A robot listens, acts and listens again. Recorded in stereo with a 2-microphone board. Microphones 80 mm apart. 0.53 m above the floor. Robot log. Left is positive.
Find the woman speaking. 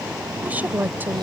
note: The woman speaking: about 25° right or 155° right.
cmd yaw -25
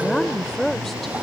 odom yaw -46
end: Found it: a woman speaking, straight ahead.